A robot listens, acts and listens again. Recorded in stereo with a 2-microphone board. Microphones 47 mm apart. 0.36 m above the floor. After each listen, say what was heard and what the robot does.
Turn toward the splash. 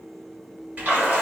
The splash: about 35° right or 145° right. Turn 35° right.
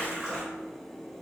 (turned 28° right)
So it is at 10° right. Turn 10° right.
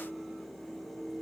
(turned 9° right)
Facing where the splash came from. I can't hear it now.